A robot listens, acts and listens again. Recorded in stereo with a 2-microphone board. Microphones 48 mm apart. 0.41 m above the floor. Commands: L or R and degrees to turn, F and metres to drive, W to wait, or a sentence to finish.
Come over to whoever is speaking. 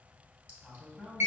L30
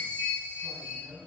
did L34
R25
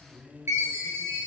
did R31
L10
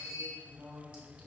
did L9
F1.0
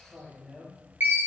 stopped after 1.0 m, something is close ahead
Arrived at the man speaking, straight ahead.